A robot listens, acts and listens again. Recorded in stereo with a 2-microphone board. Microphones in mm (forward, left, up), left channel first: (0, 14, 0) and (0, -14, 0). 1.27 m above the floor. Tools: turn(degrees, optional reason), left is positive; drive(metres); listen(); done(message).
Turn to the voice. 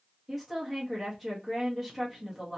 turn(degrees=30)
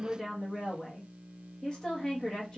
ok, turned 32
turn(degrees=150, reason="So it is at 150° left.")
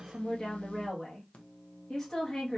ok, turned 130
turn(degrees=20, reason="The woman speaking is now 20° left.")
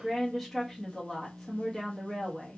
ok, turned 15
done("Found it: a woman speaking, straight ahead, 1 to 2 m away.")